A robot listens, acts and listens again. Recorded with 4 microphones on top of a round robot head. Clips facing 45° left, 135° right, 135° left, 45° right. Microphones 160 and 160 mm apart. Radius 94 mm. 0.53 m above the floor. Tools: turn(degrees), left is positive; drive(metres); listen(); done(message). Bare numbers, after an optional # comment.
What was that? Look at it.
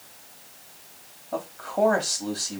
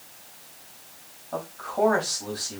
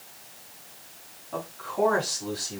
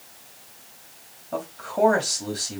# The man speaking: 15° right.
turn(-15)
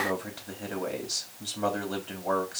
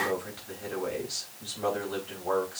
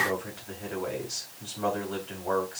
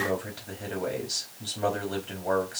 done("Found it: a man speaking, straight ahead, 2 to 4 m away.")